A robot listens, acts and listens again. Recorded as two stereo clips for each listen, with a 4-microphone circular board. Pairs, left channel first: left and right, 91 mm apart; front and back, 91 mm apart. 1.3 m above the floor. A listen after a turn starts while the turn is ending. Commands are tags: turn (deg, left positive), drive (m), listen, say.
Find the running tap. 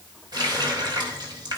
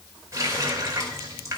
<turn deg="-125"/>
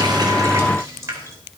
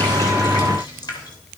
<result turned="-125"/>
<turn deg="-35"/>
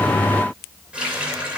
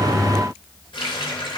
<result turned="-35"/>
<turn deg="-15"/>
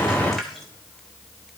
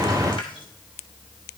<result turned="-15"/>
<say>Found it: a running tap, straight ahead.</say>